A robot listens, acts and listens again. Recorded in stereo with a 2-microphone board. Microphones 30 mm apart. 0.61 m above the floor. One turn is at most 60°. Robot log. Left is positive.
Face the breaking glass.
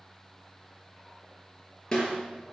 cmd idle
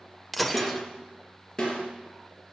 cmd yaw +30
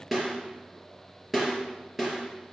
cmd idle
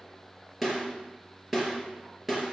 end: I heard breaking glass, but can't make it out now. It was about 25° right or 145° left.